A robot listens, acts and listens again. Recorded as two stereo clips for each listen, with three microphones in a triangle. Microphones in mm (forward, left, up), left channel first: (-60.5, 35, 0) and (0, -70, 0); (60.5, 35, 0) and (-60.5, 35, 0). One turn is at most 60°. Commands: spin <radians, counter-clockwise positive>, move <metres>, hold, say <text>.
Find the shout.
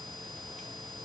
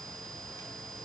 hold
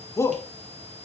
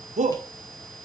spin -1.05
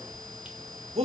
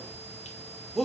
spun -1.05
spin -1.05
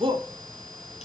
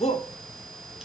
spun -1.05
spin -0.35
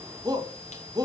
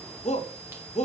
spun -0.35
say Facing the shout.